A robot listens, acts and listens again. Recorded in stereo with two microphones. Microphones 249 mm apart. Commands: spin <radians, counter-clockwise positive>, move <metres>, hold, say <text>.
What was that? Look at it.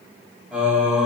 spin -0.52
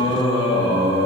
spin 0.44
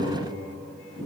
say Found it: singing, straight ahead.